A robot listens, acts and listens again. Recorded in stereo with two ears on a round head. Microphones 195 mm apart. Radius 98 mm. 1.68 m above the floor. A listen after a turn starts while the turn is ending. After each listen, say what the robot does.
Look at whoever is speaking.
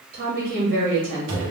Turn 45° right.
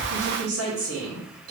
Turn 95° right.
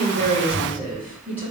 Turn 10° right.
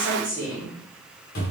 Found it: a woman speaking, straight ahead.